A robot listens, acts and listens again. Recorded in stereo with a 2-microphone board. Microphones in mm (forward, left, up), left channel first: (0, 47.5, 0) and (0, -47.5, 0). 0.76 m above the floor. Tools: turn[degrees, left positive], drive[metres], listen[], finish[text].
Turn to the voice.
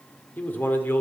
Thought: The man speaking: about 20° left or 160° left.
Action: turn[20]
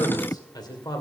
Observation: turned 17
Thought: The man speaking: about 45° left or 135° left.
Action: turn[45]
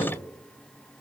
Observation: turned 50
Action: listen[]
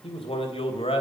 Thought: So it is at 75° left.
Action: turn[75]
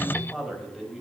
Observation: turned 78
Action: finish[Facing the man speaking, over 4 m away.]